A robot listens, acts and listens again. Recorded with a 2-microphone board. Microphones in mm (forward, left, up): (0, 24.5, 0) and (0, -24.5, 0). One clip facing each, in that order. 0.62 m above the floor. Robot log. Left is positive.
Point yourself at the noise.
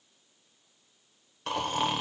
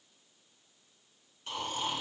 cmd yaw +90
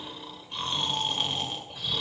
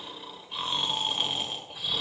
end: Found it: snoring, straight ahead.